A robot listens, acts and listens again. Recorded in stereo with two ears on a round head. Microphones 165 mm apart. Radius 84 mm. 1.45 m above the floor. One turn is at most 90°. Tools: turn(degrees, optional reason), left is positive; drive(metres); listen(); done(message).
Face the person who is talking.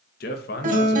turn(degrees=55, reason="The man speaking: about 55° left or 125° left.")
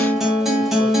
listen()
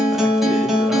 listen()
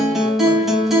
done("I heard a man speaking, but can't make it out now. It was about straight ahead or 70° left.")